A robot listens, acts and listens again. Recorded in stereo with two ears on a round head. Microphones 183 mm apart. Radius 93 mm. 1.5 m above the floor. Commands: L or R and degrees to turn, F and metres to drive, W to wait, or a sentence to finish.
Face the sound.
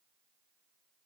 W
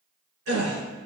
R90
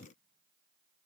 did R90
Facing where the gasp came from. I can't hear it now.